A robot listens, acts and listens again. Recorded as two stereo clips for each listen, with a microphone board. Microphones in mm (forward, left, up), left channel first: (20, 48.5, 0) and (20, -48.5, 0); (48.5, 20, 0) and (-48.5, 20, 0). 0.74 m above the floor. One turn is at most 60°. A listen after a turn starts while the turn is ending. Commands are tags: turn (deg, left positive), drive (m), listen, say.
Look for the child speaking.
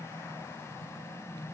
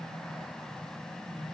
<listen/>
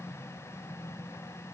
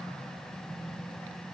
<listen/>
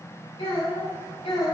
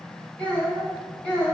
<turn deg="60"/>
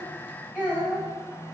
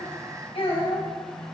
<turn deg="20"/>
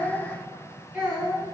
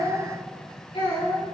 <say>Found it: a child speaking, straight ahead, over 4 m away.</say>